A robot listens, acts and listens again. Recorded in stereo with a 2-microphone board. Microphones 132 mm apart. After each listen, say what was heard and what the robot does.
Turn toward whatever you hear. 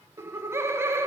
The laughter: about 20° right or 160° right. Turn 20° right.
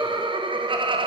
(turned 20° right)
So it is at 135° right. Turn 135° right.
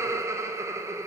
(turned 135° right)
The laughter is now 25° right. Turn 25° right.
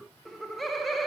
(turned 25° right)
Facing the laughter.